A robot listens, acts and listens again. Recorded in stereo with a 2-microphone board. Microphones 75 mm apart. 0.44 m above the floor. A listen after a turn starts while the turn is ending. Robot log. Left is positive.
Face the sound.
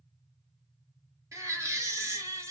note: The baby crying: about 45° right or 135° right.
cmd yaw -45
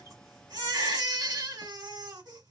note: So it is at 85° right.
cmd yaw -85
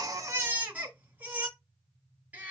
note: The baby crying is now 25° right.
cmd yaw -25
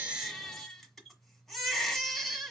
end: Found it: a baby crying, straight ahead.